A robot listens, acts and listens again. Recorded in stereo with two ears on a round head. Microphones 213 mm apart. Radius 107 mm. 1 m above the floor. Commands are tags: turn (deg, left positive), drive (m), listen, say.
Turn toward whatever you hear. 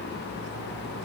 <listen/>
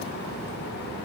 <listen/>
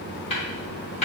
<turn deg="30"/>
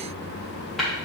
<listen/>
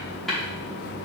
<say>Facing the tapping, 2 to 4 m away.</say>